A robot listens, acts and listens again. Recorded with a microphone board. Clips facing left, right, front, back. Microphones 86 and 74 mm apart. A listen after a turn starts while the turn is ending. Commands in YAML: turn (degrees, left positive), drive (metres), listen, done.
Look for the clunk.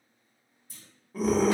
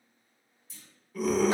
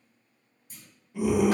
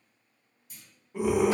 turn: 50
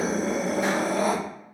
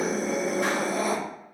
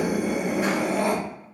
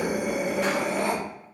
done: "Facing where the clunk came from. I can't hear it now."